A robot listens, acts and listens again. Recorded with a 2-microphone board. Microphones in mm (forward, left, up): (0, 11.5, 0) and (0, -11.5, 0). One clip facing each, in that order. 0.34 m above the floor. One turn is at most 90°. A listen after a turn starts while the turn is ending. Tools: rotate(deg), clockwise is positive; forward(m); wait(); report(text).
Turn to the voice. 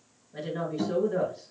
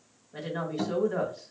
rotate(55)
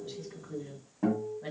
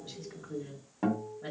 rotate(10)
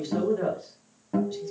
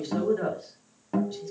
report("Facing the woman speaking.")